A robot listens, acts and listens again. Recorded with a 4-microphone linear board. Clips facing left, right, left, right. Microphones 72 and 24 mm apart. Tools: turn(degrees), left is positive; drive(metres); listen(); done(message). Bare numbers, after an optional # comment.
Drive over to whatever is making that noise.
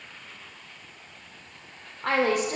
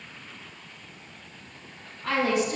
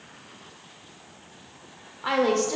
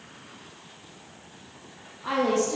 # The woman speaking: about 55° left or 125° left.
turn(55)
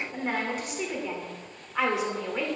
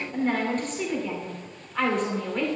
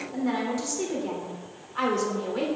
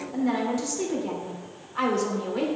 # So it is at 10° left.
turn(10)
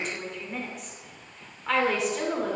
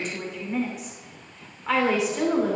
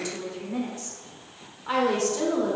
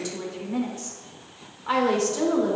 drive(1.0)
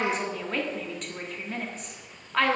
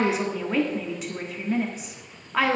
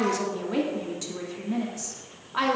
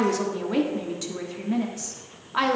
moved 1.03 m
# The woman speaking is now 10° right.
turn(-10)
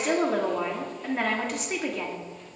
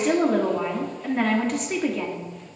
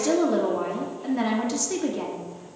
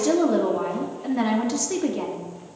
drive(1.0)
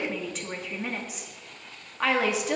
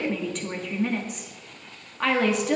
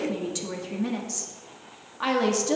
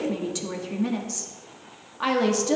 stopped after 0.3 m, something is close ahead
done("Arrived at the woman speaking, straight ahead.")